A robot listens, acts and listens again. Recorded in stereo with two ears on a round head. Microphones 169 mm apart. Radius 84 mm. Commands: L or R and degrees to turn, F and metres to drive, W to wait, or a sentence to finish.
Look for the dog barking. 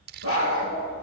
L90
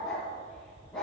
Found it: a dog barking, straight ahead, 2 to 4 m away.